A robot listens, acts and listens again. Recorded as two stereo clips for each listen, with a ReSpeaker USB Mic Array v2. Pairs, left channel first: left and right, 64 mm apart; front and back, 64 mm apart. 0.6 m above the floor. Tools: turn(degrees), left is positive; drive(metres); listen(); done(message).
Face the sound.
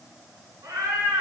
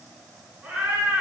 turn(degrees=-110)
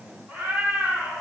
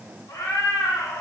turn(degrees=-20)
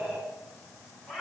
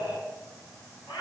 turn(degrees=10)
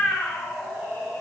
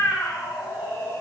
turn(degrees=15)
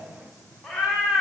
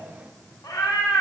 turn(degrees=10)
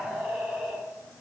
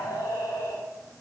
done("Found it: a cat meowing, straight ahead, 2 to 4 m away.")